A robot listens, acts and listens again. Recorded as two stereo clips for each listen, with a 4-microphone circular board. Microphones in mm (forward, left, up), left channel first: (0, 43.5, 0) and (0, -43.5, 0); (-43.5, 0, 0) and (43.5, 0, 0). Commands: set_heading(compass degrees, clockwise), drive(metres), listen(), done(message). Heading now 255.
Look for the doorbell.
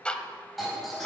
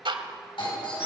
set_heading(75)
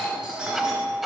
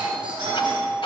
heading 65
set_heading(75)
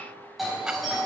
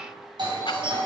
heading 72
done("Found it: a doorbell, straight ahead.")